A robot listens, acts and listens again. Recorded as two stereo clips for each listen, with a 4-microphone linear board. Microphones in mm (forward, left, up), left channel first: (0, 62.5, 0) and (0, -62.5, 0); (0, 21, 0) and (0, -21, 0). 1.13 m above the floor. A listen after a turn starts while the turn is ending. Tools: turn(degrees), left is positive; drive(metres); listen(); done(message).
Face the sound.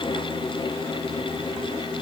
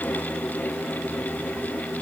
listen()
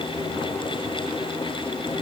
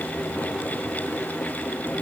listen()
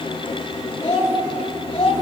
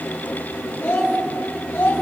turn(degrees=45)
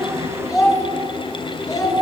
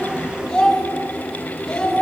done("Facing the child speaking.")